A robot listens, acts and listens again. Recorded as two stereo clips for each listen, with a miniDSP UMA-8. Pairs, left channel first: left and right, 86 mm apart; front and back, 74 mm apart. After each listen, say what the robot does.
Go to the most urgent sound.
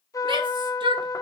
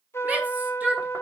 Turn 110° right.
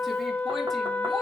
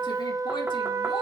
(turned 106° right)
Keep listening.
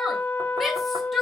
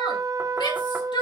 Drive 1.0 m forward.
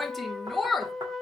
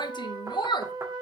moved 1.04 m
Drive 1.0 m forward.
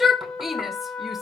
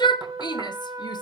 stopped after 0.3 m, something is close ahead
I am next to the shout.